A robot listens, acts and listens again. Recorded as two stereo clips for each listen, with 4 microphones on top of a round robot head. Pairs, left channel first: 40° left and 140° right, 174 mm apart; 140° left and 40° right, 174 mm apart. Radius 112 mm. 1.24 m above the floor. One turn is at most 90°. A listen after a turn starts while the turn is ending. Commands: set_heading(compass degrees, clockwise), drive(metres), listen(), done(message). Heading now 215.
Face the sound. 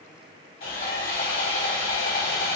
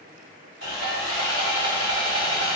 done("Found it: sawing, straight ahead.")